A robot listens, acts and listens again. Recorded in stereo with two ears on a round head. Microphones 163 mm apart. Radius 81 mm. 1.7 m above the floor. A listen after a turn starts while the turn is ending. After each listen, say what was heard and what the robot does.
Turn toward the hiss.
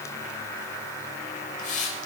The hiss: about 45° left or 135° left. Turn 45° left.
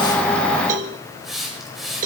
Facing the hiss, over 4 m away.